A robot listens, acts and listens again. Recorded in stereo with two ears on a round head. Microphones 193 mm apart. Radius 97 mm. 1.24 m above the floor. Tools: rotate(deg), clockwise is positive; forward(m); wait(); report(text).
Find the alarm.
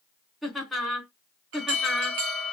rotate(60)
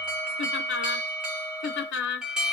report("Facing the alarm.")